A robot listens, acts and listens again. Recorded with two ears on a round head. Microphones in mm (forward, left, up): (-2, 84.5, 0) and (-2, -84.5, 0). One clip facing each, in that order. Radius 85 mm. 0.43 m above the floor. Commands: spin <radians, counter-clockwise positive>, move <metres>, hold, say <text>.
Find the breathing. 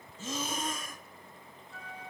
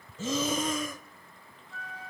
spin -1.05
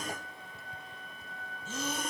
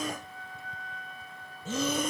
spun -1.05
spin -0.96
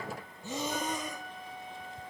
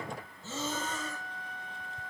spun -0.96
spin 0.26
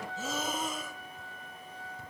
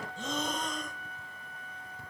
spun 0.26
say Facing the breathing, under 1 m away.